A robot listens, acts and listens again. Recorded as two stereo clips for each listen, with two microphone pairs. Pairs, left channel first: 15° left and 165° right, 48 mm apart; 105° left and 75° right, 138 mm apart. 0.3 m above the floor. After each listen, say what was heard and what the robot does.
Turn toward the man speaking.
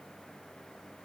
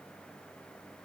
Keep listening.
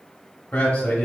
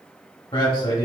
The man speaking: 65° left. Turn 65° left.
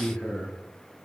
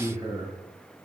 The man speaking is now 45° right. Turn 45° right.
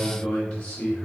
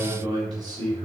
The man speaking is now 45° right. Turn 45° right.
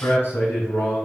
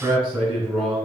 The man speaking is now 10° right. Turn 10° right.
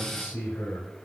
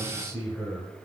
Found it: a man speaking, straight ahead, 1 to 2 m away.